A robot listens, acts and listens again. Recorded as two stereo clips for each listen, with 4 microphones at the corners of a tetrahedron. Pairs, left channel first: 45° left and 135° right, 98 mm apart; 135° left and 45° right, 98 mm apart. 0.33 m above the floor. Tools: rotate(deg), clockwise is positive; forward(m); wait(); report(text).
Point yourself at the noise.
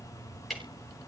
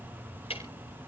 rotate(-135)
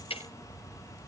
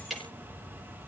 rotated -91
rotate(-45)
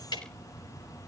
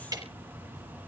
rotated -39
report("Found it: ticking, straight ahead.")